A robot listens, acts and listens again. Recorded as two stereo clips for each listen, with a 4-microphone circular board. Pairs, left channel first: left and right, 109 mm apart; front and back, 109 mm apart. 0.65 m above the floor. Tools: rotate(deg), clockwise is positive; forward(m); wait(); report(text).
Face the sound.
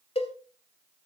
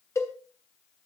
rotate(-65)
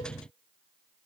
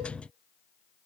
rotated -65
wait()
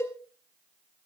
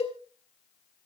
rotate(-25)
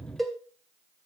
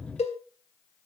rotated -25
report("Facing the cowbell, 1 to 2 m away.")